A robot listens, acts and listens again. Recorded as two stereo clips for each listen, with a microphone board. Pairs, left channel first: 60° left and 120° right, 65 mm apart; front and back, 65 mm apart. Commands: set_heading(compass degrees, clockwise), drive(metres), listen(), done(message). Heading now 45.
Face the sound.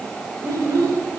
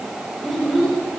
set_heading(130)
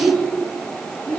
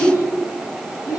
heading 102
set_heading(117)
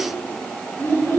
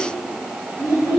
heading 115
set_heading(105)
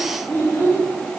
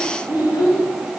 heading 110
done("Facing the child speaking, 2 to 4 m away.")